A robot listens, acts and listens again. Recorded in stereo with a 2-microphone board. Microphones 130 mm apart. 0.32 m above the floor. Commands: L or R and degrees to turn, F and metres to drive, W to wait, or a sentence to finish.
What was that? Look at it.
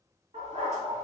R55
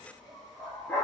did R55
Facing the dog barking.